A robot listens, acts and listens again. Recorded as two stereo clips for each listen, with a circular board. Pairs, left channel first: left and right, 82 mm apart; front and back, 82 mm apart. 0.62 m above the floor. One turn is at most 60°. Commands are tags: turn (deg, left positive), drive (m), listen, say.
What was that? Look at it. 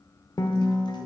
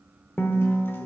<turn deg="60"/>
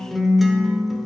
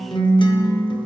<say>Found it: a guitar, straight ahead.</say>